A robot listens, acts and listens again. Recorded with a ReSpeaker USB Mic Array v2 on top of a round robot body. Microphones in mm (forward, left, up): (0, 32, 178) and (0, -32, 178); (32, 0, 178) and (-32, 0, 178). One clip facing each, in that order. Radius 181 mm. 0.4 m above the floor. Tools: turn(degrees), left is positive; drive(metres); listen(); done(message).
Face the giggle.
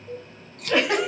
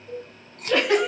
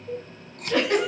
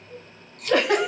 turn(degrees=170)
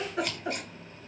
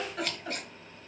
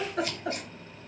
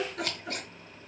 turn(degrees=25)
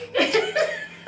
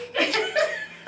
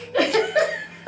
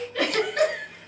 done("Facing the giggle.")